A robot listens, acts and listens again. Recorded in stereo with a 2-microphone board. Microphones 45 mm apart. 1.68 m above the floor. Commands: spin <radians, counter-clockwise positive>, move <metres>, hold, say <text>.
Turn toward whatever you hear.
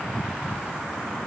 hold
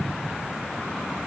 hold
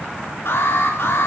spin 1.22
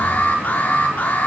spin 0.70
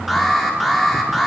say Facing the alarm, over 4 m away.